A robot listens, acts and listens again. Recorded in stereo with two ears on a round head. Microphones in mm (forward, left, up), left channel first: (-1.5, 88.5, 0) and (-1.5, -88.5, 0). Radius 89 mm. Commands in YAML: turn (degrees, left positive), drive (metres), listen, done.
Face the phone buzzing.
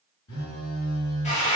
turn: 75
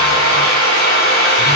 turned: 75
listen: true
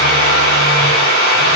listen: true
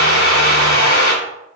done: "I heard a phone buzzing, but can't make it out now. It was about straight ahead or 30° left."